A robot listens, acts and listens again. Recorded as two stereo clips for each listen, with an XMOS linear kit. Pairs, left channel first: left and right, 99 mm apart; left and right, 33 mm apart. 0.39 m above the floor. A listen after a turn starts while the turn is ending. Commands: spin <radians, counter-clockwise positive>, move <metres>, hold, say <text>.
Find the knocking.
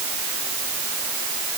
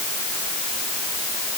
hold
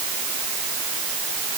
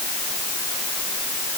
hold
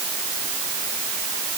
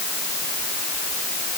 say I can't make out knocking to turn to.